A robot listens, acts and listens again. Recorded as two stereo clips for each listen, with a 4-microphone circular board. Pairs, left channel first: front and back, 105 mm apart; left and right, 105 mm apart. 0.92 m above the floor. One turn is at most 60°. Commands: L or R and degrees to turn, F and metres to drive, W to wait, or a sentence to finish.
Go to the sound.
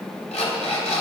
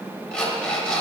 L10
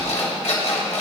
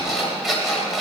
F1.0
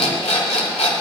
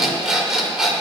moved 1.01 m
F1.0
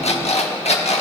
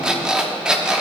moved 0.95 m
F1.0
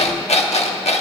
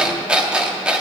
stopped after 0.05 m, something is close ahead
R10
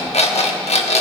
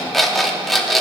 Arrived at the alarm clock, straight ahead.